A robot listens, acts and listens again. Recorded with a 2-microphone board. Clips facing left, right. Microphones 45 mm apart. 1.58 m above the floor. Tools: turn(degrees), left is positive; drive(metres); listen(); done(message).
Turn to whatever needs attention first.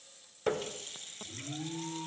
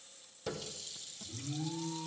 turn(degrees=30)
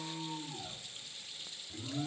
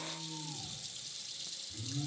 turn(degrees=120)
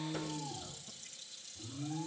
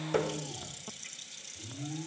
done("Facing the alarm, over 4 m away.")